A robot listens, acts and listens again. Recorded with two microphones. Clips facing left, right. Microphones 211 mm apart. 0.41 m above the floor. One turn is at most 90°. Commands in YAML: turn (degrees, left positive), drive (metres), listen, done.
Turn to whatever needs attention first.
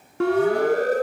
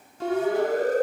turn: 75
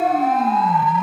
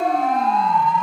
done: "Facing the siren."